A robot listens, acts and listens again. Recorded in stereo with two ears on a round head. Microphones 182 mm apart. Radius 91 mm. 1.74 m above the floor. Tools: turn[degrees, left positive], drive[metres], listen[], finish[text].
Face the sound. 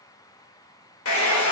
Action: turn[90]
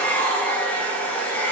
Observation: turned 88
Thought: So it is at 10° left.
Action: turn[10]
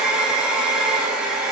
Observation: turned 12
Action: finish[Found it: a hair dryer, straight ahead.]